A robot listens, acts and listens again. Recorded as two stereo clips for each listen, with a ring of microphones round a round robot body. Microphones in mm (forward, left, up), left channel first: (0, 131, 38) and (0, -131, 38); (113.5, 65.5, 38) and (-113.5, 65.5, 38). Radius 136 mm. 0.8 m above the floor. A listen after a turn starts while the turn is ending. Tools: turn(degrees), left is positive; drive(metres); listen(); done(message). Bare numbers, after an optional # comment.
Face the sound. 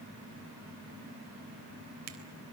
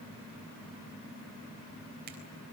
listen()
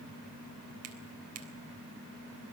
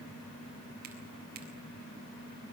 listen()
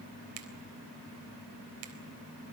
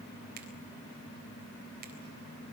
# The finger snap: 125° right.
turn(-125)
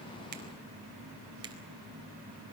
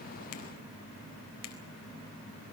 listen()
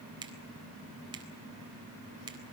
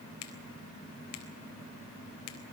# The finger snap is now 15° right.
turn(-15)
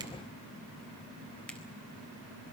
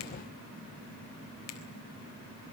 done("Facing the finger snap.")